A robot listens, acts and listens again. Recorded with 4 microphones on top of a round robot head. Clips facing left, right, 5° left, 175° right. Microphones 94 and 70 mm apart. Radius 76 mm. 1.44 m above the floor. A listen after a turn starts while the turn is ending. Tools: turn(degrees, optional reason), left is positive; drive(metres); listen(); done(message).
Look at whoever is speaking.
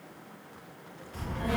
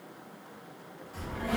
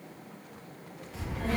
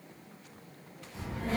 turn(degrees=-10, reason="The child speaking: 10° right.")
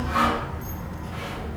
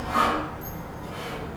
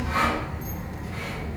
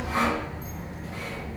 turn(degrees=-20, reason="The child speaking is now 20° right.")
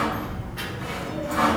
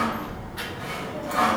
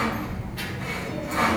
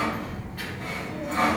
turn(degrees=-25, reason="The child speaking is now 25° right.")
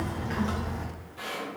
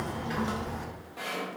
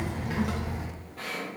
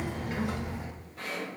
turn(degrees=-20, reason="The child speaking is now 20° right.")
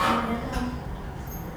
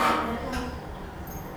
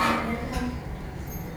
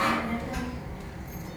turn(degrees=-20, reason="The child speaking is now 20° right.")
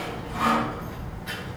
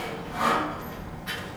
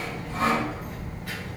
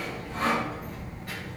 done("Found it: a child speaking, straight ahead, 1 to 2 m away.")